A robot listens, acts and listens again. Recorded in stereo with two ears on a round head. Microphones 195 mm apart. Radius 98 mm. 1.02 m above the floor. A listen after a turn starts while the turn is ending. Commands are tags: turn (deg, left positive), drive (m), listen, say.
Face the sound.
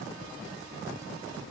<listen/>
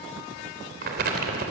<turn deg="-50"/>
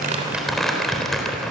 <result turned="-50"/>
<say>Found it: crumpling, straight ahead.</say>